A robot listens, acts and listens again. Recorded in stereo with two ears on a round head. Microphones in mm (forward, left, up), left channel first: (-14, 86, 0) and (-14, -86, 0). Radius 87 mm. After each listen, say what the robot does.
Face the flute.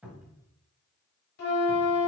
Turn 55° left.
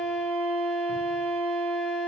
Found it: a flute, straight ahead.